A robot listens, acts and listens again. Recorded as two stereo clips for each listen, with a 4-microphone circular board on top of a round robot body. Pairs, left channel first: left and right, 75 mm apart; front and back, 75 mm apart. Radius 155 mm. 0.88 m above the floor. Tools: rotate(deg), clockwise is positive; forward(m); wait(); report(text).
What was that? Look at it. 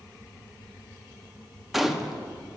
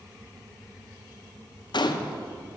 report("Found it: a gunshot, straight ahead.")